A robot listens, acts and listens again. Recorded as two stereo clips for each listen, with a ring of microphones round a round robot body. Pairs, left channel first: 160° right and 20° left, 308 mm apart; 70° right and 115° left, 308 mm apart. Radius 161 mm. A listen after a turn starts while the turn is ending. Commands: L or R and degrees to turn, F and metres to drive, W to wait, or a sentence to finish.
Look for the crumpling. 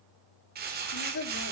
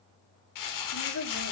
R40
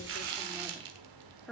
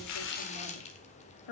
Facing the crumpling, 1 to 2 m away.